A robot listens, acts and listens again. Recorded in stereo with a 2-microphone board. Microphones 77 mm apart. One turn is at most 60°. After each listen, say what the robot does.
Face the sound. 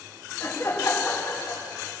Turn 50° left.
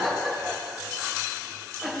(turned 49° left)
Facing the laughter, over 4 m away.